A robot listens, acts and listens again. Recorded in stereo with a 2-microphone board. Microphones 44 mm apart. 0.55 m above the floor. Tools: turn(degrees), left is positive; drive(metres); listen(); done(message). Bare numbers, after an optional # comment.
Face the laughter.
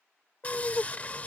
# The laughter: about 65° left or 115° left.
turn(65)
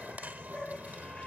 # So it is at 20° left.
turn(20)
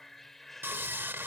done("Found it: laughter, straight ahead.")